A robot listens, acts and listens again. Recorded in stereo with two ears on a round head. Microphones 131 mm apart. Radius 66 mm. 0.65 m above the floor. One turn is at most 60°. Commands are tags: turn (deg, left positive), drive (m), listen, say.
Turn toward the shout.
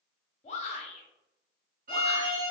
<turn deg="45"/>
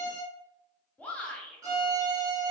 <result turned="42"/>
<turn deg="10"/>
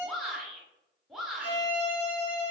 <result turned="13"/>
<say>Found it: a shout, straight ahead.</say>